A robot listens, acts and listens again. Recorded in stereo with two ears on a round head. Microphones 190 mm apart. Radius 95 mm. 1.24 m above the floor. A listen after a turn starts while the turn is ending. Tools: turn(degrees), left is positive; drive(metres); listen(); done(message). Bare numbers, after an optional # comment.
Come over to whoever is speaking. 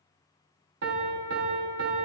listen()
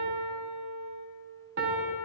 listen()
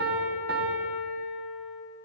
done("I can't make out anyone speaking to turn to.")